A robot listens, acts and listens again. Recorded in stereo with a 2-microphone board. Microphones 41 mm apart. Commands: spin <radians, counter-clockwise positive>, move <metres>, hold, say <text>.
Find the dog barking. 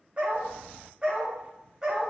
spin -0.26
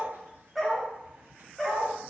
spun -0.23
spin 0.52
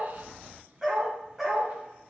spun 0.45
say Facing the dog barking.